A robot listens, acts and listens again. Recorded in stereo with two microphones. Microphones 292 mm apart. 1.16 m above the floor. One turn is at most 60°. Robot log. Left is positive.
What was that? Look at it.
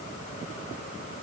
cmd idle
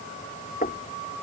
note: The knocking: about 30° left or 150° left.
cmd yaw +30
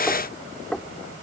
end: Found it: knocking, straight ahead.